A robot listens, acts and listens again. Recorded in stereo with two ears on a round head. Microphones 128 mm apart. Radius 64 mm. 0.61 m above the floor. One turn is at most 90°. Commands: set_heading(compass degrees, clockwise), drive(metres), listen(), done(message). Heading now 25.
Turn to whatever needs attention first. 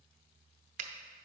listen()
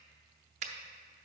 listen()
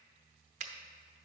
done("I can't make out anything urgent to turn to.")